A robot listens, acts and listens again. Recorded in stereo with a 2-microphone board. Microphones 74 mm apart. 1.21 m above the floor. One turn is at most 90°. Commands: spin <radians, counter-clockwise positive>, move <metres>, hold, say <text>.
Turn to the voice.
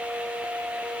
hold
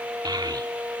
spin -1.22
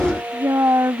spin -0.70
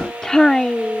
spin 0.17
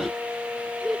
say Facing the child speaking.